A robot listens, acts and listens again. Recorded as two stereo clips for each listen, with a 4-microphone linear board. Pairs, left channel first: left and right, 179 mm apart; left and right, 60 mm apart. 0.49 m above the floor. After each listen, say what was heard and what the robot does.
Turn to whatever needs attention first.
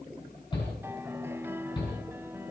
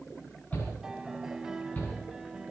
The shout: about 30° left or 150° left. Turn 30° left.
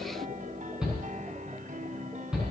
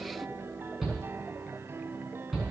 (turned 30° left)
Facing the shout, over 4 m away.